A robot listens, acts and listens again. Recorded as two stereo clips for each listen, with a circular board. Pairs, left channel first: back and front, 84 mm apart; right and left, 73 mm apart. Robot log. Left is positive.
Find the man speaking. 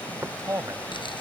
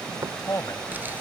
note: The man speaking: 50° right.
cmd yaw -50
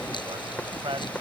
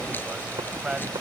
note: The man speaking is now 10° left.
cmd yaw +10
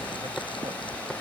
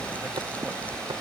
cmd idle
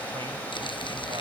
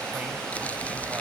cmd idle
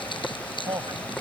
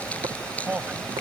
note: The man speaking is now 20° left.
cmd yaw +20
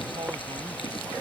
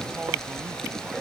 cmd idle
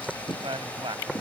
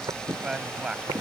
note: The man speaking is now 10° left.
cmd yaw +10
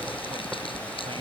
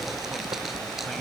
cmd idle
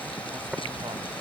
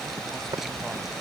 cmd idle
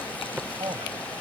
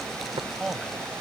end: Facing the man speaking.